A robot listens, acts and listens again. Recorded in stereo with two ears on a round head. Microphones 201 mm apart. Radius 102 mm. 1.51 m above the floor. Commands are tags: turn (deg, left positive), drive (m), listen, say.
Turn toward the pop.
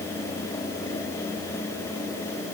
<listen/>
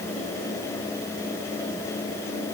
<listen/>
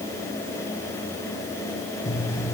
<turn deg="30"/>
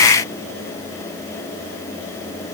<listen/>
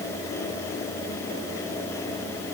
<say>I heard a pop, but can't make it out now. It was about 15° right or 135° left.</say>